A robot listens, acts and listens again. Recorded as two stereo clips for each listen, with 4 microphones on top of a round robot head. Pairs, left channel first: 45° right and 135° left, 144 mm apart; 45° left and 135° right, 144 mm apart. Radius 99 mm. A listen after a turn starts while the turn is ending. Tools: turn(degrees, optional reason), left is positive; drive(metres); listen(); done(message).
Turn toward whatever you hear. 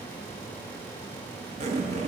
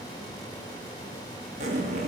turn(degrees=180, reason="The zipper: straight behind.")
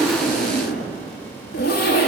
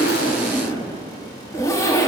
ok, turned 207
turn(degrees=-25, reason="The zipper is now 25° right.")
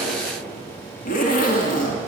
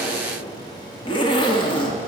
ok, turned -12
turn(degrees=-15, reason="The zipper is now 15° right.")
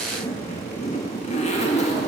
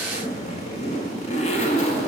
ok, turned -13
done("Facing the zipper.")